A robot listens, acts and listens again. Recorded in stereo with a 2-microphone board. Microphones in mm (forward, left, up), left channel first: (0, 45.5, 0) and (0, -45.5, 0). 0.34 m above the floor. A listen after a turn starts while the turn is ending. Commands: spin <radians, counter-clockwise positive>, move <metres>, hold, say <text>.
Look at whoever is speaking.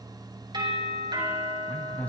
spin 0.26
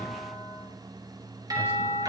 hold
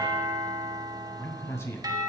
spin 2.62
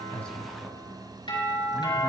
hold
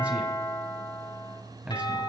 spin -0.26
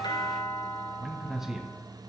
say Facing the man speaking, 2 to 4 m away.